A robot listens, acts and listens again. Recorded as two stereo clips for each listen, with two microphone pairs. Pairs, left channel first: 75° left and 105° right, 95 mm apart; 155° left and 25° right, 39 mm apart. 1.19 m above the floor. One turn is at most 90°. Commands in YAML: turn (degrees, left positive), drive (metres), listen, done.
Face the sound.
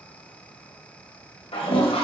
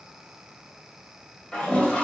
turn: 90
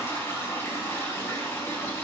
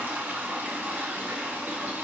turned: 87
turn: 10
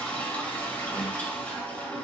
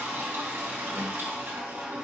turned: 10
done: "Facing the toilet flushing, 1 to 2 m away."